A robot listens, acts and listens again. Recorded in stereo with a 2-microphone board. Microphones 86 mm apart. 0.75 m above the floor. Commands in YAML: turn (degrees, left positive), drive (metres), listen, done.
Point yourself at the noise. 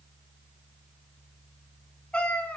turn: 15
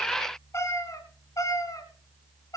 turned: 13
turn: 45
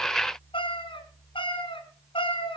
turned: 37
turn: 95
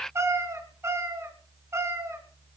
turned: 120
turn: -30
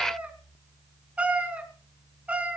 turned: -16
turn: -15
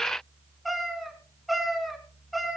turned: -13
done: "Facing the cat meowing, 2 to 4 m away."